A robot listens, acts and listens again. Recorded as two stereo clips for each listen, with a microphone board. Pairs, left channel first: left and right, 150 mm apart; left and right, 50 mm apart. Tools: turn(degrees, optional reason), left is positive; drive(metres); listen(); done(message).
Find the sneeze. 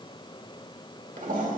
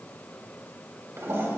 listen()
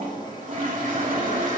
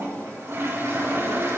listen()
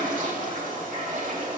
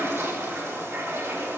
done("I can't make out a sneeze to turn to.")